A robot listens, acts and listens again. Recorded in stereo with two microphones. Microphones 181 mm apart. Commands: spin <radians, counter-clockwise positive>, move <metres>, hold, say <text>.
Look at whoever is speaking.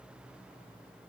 hold
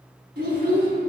spin -1.05
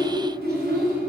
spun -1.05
spin -1.22
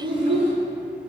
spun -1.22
spin -0.61
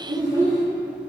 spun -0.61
spin -0.35
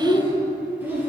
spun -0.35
spin -0.17
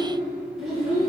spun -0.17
say Facing the child speaking.